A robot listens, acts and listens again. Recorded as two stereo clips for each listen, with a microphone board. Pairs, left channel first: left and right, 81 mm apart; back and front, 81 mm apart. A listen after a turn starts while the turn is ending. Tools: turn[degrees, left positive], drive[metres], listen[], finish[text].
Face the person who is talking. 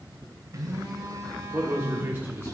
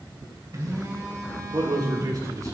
Thought: The man speaking: 35° right.
Action: turn[-35]
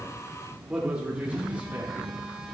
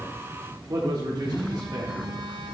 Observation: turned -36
Thought: The man speaking is now 25° right.
Action: turn[-25]
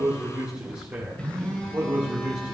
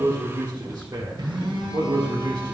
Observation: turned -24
Thought: The man speaking is now 30° right.
Action: turn[-30]
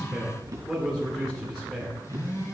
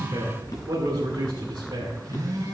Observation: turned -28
Action: finish[Facing the man speaking.]